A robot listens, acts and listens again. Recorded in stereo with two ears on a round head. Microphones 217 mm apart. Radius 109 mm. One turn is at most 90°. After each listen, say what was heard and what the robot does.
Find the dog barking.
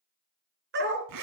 The dog barking: about 45° right or 135° right. Turn 45° right.
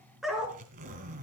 Facing the dog barking.